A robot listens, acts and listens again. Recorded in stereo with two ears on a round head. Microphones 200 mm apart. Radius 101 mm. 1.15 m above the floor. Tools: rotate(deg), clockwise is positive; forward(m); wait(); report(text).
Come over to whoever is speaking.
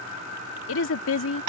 rotate(-65)
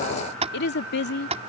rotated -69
rotate(-50)
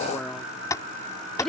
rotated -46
forward(1.0)
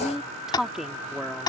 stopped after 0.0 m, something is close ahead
report("Something is in my way. I am facing the woman speaking but have not reached it.")